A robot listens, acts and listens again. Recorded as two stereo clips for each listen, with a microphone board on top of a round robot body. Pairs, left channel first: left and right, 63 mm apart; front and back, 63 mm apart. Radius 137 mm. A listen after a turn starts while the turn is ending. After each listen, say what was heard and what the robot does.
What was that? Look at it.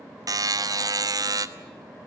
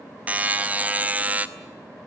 The buzzer: 115° right. Turn 115° right.
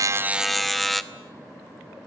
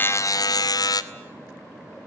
Facing the buzzer, 1 to 2 m away.